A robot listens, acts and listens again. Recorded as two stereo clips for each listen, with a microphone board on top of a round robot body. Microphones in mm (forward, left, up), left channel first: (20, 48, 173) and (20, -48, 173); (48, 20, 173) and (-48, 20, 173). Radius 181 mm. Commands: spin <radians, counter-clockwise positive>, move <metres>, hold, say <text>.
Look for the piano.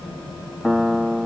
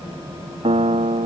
spin -3.05
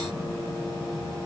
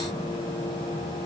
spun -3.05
hold
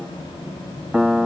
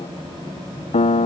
spin -0.17
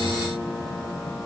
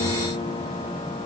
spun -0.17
hold
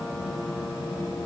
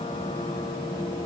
hold
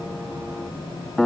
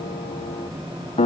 say Facing the piano.